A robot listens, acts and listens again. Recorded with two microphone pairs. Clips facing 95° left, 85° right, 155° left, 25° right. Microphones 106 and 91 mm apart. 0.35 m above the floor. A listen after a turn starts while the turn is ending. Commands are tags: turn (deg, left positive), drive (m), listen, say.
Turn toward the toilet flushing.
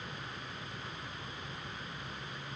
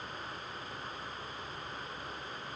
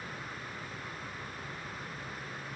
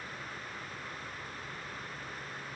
<listen/>
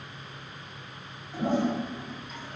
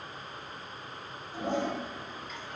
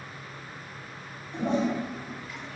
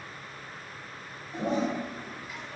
<turn deg="50"/>
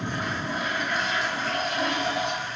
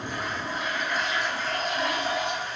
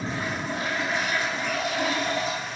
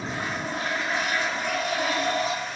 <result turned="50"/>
<turn deg="10"/>
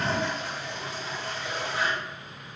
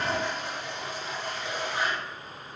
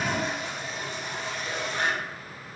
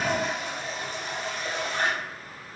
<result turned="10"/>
<say>Facing the toilet flushing, 1 to 2 m away.</say>